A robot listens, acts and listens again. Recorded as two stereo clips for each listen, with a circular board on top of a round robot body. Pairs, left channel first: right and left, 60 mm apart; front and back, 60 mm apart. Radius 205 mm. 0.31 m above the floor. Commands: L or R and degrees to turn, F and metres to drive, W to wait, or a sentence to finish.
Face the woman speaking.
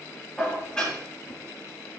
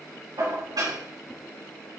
W
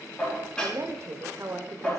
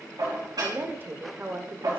L130
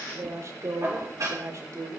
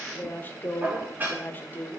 L55
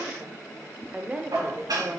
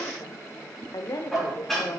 L20
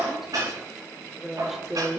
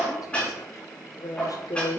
L10
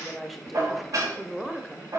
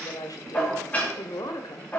Facing the woman speaking.